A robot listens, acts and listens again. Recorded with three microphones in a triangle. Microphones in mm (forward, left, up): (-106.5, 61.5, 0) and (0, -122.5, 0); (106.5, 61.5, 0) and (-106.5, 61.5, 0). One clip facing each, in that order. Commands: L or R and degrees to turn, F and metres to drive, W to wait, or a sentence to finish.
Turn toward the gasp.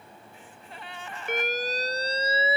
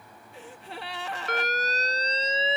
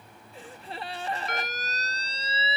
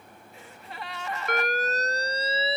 R55
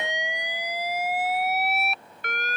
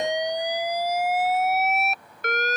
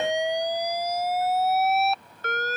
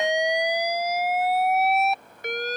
I heard a gasp from this way, but can't make it out now.